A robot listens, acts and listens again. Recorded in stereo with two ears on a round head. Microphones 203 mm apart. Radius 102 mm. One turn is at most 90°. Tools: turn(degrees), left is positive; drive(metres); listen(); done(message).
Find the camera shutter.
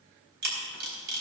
turn(degrees=-50)
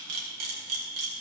turn(degrees=-75)
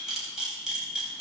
done("Facing the camera shutter, 2 to 4 m away.")